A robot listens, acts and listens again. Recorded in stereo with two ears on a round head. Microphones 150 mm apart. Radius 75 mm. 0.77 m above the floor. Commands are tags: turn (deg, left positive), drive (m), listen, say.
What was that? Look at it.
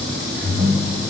<turn deg="-30"/>
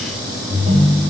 <turn deg="-135"/>
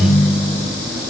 <turn deg="-65"/>
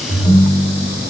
<say>Facing the ringtone, 2 to 4 m away.</say>